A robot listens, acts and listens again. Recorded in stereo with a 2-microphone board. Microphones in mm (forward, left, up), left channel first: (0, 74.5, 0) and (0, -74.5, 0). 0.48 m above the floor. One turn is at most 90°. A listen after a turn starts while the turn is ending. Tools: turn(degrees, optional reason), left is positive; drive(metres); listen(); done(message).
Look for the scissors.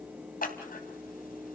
turn(degrees=75, reason="The scissors: about 75° left or 105° left.")
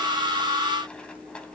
listen()
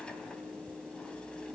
listen()
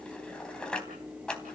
done("Found it: scissors, straight ahead.")